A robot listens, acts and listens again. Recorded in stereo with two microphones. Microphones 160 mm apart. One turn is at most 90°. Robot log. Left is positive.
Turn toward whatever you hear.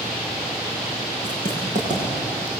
note: The writing: about 50° right or 130° right.
cmd yaw -50
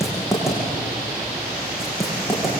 end: Found it: writing, straight ahead, over 4 m away.